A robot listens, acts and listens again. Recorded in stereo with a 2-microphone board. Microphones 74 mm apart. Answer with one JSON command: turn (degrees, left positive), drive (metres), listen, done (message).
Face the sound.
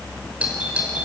{"turn": -20}
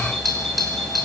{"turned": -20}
{"done": "Facing the doorbell."}